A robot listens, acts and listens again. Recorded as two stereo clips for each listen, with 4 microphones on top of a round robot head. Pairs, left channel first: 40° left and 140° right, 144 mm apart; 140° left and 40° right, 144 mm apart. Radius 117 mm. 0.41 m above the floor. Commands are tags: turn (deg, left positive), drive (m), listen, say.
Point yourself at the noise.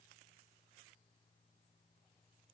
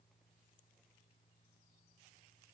<listen/>
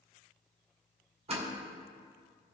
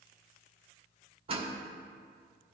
<turn deg="-95"/>
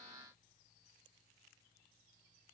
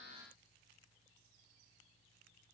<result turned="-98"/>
<say>Facing where the door slam came from. I can't hear it now.</say>